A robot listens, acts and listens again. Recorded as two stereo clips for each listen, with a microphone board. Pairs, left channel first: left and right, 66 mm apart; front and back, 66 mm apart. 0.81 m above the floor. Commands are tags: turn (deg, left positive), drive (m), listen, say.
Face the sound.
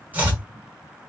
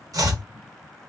<turn deg="-155"/>
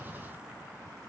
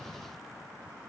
<listen/>
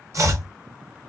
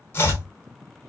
<turn deg="-50"/>
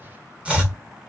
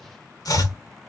<turn deg="-20"/>
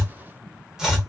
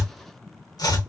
<turn deg="-10"/>
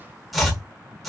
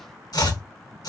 <say>Facing the chopping, 1 to 2 m away.</say>